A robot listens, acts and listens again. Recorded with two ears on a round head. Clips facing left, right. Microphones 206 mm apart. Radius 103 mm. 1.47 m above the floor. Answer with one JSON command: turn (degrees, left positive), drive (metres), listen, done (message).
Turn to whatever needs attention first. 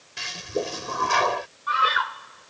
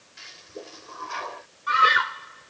{"turn": -30}
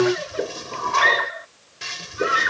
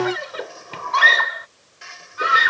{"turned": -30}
{"turn": -115}
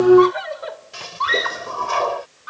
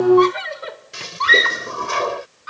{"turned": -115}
{"turn": -35}
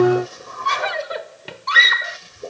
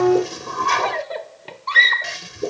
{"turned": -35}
{"turn": 10}
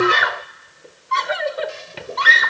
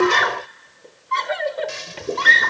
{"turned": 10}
{"done": "Facing the scream."}